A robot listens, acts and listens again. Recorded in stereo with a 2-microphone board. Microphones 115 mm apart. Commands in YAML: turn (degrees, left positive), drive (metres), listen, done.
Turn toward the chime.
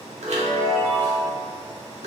turn: -90
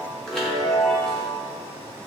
done: "Facing the chime, under 1 m away."